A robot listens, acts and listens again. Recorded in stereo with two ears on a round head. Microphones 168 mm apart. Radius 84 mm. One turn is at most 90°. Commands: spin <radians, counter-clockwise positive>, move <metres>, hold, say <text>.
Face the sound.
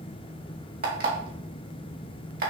spin -0.87
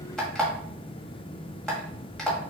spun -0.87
say Facing the alarm clock, 1 to 2 m away.